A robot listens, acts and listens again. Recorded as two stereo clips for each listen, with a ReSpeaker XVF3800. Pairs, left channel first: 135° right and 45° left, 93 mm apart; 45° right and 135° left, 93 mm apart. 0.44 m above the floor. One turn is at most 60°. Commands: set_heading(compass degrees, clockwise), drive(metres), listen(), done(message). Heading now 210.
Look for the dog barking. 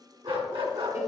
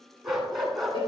set_heading(170)
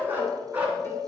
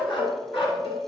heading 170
set_heading(200)
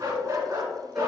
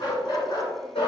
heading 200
set_heading(215)
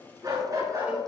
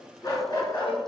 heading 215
done("Facing the dog barking.")